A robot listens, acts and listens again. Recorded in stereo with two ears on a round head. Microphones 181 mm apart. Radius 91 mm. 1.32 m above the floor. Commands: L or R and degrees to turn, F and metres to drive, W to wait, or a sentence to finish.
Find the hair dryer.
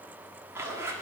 W
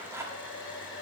L65
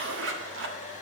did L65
L40
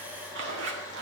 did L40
W
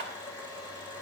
L20
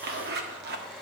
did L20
W
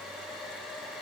Found it: a hair dryer, straight ahead, 2 to 4 m away.